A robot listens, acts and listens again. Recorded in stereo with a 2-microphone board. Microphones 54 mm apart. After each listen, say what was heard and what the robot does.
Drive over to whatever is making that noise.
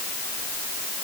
Keep listening.
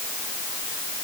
Keep listening.
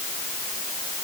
I can't make out anything to turn to.